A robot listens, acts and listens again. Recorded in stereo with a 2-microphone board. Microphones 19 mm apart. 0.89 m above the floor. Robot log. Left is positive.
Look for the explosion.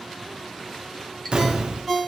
note: The explosion: about 45° right or 135° right.
cmd yaw -45
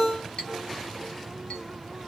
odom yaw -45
cmd idle
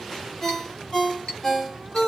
end: I heard an explosion, but can't make it out now. It was about straight ahead or 90° right.